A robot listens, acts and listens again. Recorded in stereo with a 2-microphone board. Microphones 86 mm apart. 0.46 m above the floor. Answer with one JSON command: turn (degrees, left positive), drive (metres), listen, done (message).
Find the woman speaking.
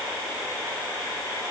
{"listen": true}
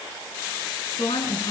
{"turn": 90}
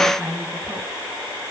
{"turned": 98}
{"turn": -10}
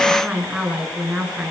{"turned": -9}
{"turn": -10}
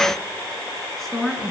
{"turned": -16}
{"done": "Found it: a woman speaking, straight ahead."}